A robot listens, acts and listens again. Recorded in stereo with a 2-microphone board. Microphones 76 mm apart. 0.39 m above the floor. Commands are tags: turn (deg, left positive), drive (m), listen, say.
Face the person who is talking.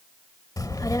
<turn deg="50"/>
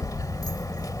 <turn deg="65"/>
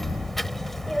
<say>Found it: a child speaking, straight ahead.</say>